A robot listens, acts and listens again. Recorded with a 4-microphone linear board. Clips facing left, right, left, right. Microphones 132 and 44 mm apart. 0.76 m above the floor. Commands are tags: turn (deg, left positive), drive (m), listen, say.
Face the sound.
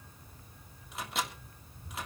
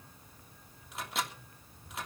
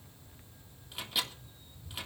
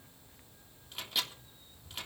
<turn deg="30"/>
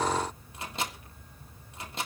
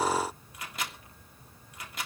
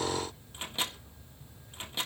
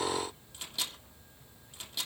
<turn deg="150"/>
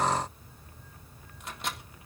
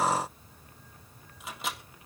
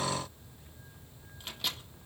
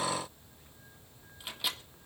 <say>Found it: a microwave, straight ahead.</say>